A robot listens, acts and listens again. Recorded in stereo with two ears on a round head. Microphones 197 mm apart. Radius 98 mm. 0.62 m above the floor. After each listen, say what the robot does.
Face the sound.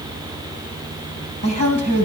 Turn 90° right.
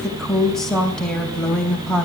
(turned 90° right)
Facing the woman speaking, 2 to 4 m away.